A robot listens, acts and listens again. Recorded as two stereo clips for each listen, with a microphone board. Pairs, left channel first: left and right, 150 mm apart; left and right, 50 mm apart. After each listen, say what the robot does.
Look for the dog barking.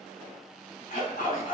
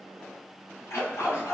Turn 75° left.
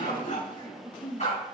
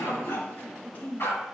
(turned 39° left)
Turn 50° left.
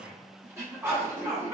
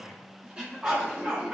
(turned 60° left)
Turn 20° right.
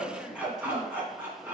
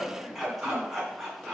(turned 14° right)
Turn 15° right.
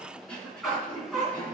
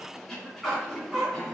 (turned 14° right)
Found it: a dog barking, straight ahead.